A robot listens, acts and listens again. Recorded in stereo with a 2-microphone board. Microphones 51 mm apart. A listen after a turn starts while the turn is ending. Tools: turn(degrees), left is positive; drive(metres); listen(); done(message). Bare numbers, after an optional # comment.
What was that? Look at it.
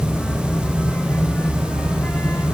listen()
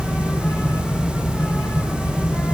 listen()
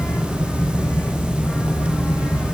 done("I can't make out anything.")